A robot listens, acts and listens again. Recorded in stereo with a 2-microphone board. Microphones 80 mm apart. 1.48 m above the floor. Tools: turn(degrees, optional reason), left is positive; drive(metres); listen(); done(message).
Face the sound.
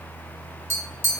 turn(degrees=-35, reason="The tapping: about 35° right or 145° right.")
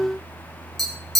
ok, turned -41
done("Found it: tapping, straight ahead, 1 to 2 m away.")